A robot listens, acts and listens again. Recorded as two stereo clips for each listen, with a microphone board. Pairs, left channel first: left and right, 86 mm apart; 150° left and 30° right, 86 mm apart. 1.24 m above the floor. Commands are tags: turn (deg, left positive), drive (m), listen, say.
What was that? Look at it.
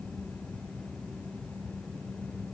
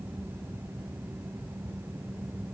<listen/>
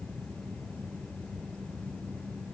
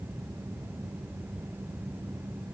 <listen/>
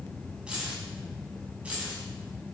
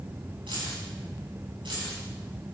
<turn deg="-15"/>
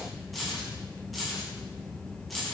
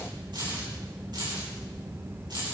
<say>Facing the keys jangling, over 4 m away.</say>